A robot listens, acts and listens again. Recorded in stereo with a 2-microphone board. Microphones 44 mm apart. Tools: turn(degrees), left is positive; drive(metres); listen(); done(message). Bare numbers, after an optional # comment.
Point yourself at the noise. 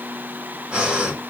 # The breathing: about 25° right or 155° right.
turn(-25)
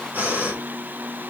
# So it is at 130° right.
turn(-130)
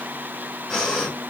# The breathing is now 10° left.
turn(10)
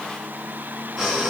done("Found it: breathing, straight ahead.")